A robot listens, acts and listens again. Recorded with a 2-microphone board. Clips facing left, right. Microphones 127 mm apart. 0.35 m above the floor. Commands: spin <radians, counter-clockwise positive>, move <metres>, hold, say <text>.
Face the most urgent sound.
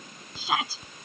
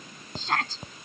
spin 0.52
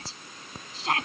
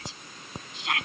spin 2.44
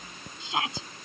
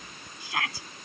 spin 0.44
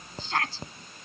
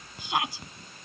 spin -0.26
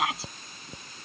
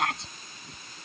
say Facing the shout.